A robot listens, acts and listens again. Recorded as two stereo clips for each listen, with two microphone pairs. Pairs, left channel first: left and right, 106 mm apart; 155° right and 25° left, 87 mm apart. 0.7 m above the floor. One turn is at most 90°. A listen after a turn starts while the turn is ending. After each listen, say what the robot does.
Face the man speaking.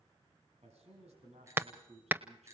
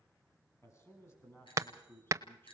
Turn 90° right.
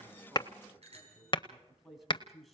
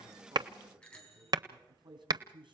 Found it: a man speaking, straight ahead.